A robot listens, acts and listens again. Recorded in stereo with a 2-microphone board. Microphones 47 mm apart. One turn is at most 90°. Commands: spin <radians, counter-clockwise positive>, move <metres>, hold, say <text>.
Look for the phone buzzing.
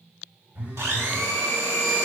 spin -0.70
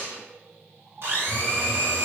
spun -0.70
say Facing the phone buzzing.